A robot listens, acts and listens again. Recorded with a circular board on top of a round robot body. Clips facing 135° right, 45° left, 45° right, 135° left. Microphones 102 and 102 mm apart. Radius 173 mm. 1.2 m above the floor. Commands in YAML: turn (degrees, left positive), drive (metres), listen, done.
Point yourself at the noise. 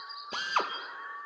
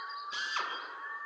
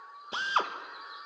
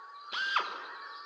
turn: -105
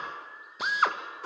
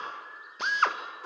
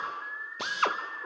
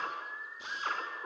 turn: -50
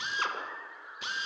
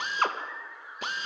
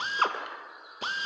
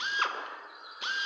done: "Facing the drill."